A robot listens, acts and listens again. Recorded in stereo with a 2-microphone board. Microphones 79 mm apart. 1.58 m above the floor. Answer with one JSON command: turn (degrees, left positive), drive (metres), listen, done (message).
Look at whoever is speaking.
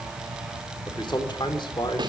{"turn": 90}
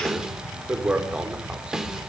{"turn": -10}
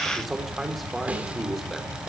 {"listen": true}
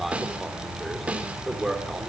{"done": "Facing the man speaking."}